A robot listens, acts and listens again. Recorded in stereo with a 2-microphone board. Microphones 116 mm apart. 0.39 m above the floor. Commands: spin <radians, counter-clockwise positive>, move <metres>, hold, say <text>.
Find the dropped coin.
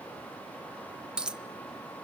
spin -0.52
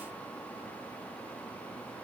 hold
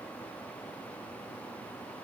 say I heard a dropped coin, but can't make it out now. It was about 20° left or 140° right.